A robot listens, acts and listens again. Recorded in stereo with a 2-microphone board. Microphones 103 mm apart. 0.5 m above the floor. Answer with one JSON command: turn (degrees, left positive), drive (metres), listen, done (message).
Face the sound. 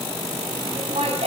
{"turn": -75}
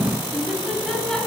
{"done": "Found it: laughter, straight ahead."}